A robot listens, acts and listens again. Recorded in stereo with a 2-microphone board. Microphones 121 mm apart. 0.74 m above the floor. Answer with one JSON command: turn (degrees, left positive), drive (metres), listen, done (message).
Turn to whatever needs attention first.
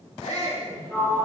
{"turn": 65}
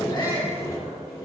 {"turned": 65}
{"turn": 40}
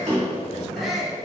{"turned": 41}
{"done": "Found it: a shout, straight ahead, 1 to 2 m away."}